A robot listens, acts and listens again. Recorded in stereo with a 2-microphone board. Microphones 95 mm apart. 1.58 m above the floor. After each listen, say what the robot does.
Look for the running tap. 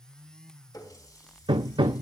Turn 40° left.
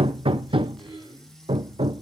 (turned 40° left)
Keep listening.
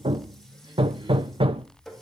Facing the running tap.